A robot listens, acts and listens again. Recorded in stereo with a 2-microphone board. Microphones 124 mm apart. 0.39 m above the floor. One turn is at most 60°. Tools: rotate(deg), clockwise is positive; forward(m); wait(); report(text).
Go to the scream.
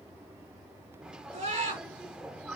rotate(60)
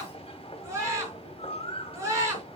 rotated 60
rotate(25)
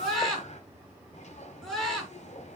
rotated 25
forward(1.0)
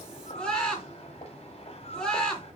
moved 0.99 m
forward(1.0)
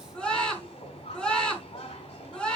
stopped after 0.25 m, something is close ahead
rotate(-10)
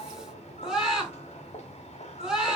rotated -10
report("Blocked. The scream is further on, straight ahead.")